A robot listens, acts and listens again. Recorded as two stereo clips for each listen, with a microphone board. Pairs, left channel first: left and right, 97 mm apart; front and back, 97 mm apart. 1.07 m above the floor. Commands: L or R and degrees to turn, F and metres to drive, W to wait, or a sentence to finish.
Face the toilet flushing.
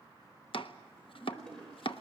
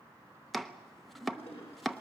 Found it: a toilet flushing, straight ahead, over 4 m away.